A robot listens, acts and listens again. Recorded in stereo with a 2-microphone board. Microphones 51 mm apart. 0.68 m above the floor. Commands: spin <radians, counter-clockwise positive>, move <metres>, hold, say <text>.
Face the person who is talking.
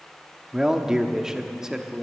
spin -0.52
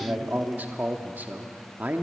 spin -2.44
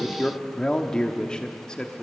spin 0.26
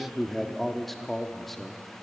say Facing the man speaking, 1 to 2 m away.